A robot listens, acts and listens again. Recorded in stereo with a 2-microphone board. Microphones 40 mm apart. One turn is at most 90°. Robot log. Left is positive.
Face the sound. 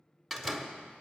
cmd yaw +30
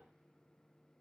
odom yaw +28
cmd idle
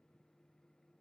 end: I heard a door slam, but can't make it out now. It was about 25° right or 150° left.